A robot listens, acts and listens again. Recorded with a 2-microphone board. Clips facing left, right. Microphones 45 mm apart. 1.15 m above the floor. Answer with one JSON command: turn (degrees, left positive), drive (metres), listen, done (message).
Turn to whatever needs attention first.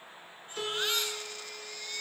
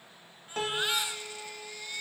{"turn": -15}
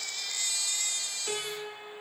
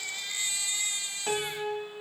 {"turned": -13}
{"turn": -150}
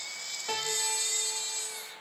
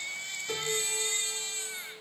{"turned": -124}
{"turn": -30}
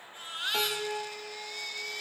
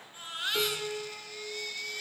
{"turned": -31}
{"done": "Facing the baby crying."}